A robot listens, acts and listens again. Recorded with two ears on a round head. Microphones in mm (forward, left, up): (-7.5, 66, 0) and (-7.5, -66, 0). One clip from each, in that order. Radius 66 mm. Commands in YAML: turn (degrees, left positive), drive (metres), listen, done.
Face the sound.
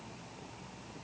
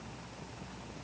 listen: true
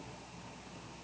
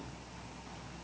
listen: true
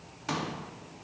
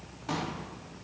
turn: 40
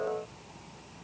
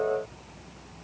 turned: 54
listen: true
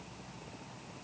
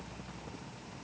done: "I heard a pop, but can't make it out now. It was about 15° right or 85° left."